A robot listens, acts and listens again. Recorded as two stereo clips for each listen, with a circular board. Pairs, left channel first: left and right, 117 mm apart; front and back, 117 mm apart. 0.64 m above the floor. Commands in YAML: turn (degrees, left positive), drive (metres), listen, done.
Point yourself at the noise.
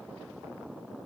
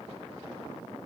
listen: true
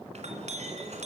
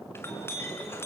turn: -70
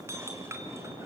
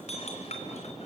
turn: -25
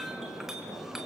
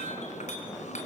done: "Facing the clink."